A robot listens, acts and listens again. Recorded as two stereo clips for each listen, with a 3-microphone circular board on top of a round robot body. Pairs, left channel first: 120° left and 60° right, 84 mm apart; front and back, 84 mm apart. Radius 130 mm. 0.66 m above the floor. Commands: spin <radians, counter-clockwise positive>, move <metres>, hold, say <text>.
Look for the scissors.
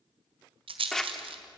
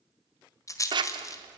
spin -2.71
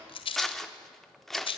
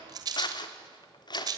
spin 0.61
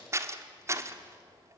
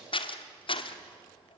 say Found it: scissors, straight ahead.